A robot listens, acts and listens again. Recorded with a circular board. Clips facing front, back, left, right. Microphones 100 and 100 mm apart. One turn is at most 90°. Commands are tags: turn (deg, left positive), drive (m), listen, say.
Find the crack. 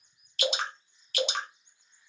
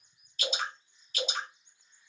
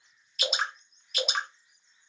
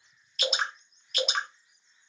<listen/>
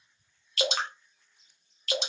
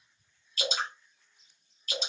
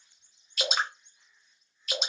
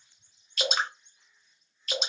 <listen/>
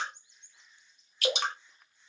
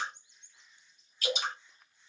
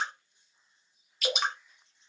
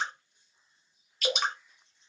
<say>I can't make out a crack, only dripping.</say>